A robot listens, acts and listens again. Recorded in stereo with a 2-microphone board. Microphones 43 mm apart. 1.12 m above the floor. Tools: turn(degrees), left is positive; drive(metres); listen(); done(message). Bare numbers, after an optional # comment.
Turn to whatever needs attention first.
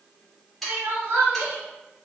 # The crying: about 60° right or 120° right.
turn(-60)
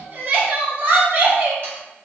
# So it is at 50° right.
turn(-50)
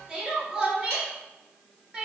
# The crying is now 15° right.
turn(-15)
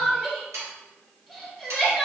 done("Found it: crying, straight ahead, under 1 m away.")